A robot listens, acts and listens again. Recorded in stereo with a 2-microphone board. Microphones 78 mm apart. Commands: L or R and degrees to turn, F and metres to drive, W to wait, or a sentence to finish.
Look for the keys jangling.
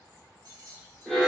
R60
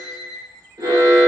W
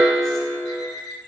W
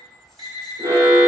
I heard keys jangling, but can't make it out now. It was about straight ahead or 60° right.